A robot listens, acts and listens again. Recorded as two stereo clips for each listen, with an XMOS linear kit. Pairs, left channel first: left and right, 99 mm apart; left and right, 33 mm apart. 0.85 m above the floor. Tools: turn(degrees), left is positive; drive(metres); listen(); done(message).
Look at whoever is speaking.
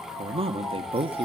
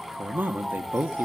turn(degrees=-70)
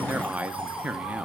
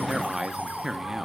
turn(degrees=-15)
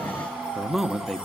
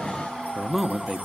done("Facing the man speaking.")